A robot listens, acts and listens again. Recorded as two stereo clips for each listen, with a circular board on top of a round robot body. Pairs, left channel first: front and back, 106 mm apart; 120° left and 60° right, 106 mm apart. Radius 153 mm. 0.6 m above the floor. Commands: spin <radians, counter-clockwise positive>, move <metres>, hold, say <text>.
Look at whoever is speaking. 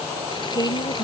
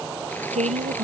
spin -0.96
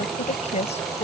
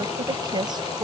spin -0.17
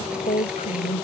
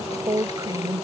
say Found it: a woman speaking, straight ahead.